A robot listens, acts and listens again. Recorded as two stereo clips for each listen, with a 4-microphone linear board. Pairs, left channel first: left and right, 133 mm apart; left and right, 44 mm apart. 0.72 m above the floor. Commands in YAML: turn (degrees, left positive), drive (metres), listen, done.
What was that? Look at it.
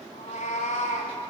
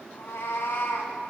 turn: 90
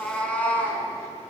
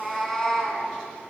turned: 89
turn: 15
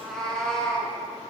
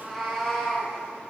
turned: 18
done: "Facing the cat meowing, 2 to 4 m away."